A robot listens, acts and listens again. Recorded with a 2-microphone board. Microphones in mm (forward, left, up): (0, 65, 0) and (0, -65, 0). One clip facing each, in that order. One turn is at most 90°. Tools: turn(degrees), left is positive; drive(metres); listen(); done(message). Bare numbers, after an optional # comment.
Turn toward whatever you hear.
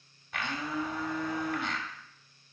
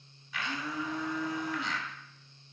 # The blender: about 60° left or 120° left.
turn(60)
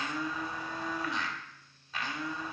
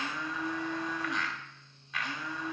# So it is at 35° left.
turn(35)
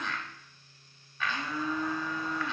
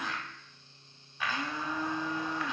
# The blender is now 15° right.
turn(-15)
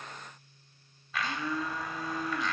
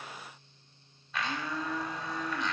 done("Found it: a blender, straight ahead, 1 to 2 m away.")